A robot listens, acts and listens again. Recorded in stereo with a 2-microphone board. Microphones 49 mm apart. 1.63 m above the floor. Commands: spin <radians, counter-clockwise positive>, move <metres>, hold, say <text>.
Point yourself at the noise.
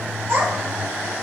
spin -0.96
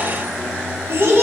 spin -0.87
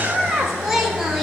say Found it: a child speaking, straight ahead.